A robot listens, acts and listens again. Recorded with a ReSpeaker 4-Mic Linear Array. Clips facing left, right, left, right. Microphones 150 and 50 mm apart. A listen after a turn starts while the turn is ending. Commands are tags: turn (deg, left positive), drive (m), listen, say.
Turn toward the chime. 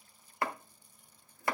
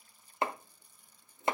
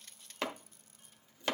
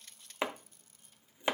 <listen/>
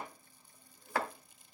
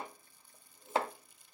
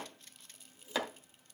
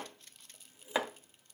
<listen/>
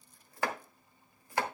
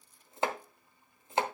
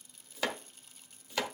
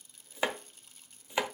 <say>I can't make out a chime to turn to.</say>